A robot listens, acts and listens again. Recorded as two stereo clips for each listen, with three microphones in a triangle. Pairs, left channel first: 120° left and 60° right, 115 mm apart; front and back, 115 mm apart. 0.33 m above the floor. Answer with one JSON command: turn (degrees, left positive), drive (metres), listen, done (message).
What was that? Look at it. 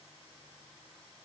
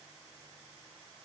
{"listen": true}
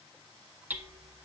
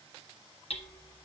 {"turn": 15}
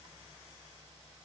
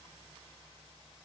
{"listen": true}
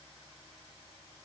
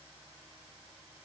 {"listen": true}
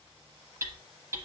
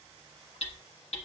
{"done": "Found it: hammering, straight ahead, 1 to 2 m away."}